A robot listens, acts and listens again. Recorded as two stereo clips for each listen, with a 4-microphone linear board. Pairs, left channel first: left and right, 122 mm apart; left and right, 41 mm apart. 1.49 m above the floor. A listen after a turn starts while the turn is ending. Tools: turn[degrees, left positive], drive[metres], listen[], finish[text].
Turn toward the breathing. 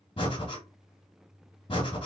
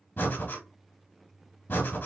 Thought: The breathing: about 45° left or 135° left.
Action: turn[45]
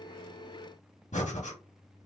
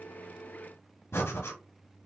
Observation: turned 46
Thought: So it is at 90° left.
Action: turn[90]
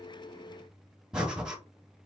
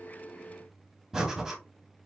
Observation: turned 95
Action: finish[Facing the breathing, 1 to 2 m away.]